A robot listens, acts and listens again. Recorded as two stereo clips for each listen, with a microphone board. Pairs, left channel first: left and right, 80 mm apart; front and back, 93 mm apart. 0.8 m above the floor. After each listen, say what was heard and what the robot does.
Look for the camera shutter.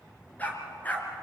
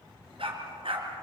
Keep listening.
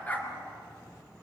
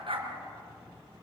Keep listening.
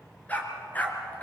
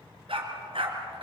I can't make out a camera shutter to turn to.